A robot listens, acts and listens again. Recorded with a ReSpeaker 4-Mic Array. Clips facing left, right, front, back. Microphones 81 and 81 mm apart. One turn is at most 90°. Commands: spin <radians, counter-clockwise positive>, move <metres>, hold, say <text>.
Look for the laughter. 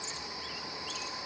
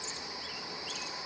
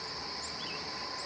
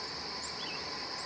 hold
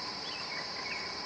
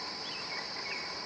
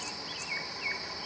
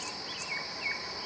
hold
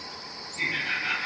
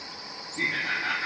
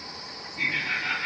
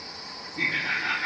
spin -1.57
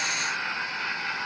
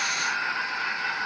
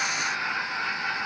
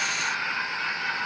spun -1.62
spin -1.13
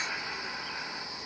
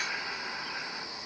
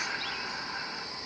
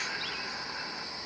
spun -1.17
hold
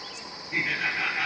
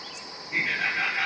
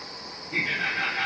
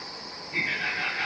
say Found it: laughter, straight ahead.